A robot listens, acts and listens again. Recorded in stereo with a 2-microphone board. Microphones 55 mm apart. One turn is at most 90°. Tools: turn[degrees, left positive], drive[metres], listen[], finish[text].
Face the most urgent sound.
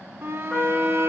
Thought: The shout: about 45° right or 135° right.
Action: turn[-45]
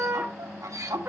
Thought: So it is at 90° right.
Action: turn[-90]
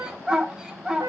Thought: The shout is now 15° right.
Action: turn[-15]
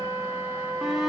Action: finish[Found it: a shout, straight ahead.]